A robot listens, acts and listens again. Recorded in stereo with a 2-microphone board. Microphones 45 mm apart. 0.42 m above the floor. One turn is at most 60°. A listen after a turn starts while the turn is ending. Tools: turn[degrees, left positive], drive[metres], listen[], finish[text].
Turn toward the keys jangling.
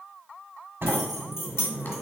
Thought: The keys jangling: about 65° left or 115° left.
Action: turn[60]
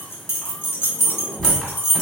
Thought: So it is at 70° left.
Action: turn[60]
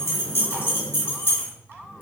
Thought: The keys jangling is now 70° left.
Action: turn[60]
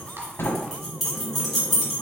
Action: finish[Found it: keys jangling, straight ahead, 1 to 2 m away.]